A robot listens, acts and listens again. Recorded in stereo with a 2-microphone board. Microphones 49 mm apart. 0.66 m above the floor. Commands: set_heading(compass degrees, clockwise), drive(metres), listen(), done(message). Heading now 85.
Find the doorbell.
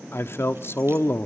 listen()
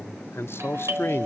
set_heading(150)
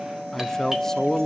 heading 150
set_heading(160)
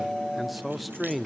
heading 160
done("Found it: a doorbell, straight ahead, 2 to 4 m away.")